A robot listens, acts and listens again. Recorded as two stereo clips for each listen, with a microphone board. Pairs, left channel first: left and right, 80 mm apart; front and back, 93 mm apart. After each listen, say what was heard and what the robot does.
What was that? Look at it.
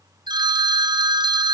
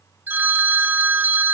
The phone ringing: 110° right. Turn 110° right.
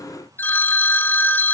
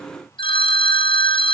The phone ringing is now 25° left. Turn 25° left.
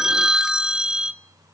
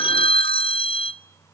Facing the phone ringing, under 1 m away.